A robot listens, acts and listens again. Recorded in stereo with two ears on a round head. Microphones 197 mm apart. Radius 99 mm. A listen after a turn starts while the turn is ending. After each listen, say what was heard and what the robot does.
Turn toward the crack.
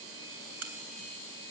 The crack: about 70° right or 110° right. Turn 70° right.
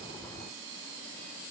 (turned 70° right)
Keep listening.
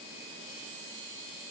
I heard a crack, but can't make it out now. It was about straight ahead or 40° right.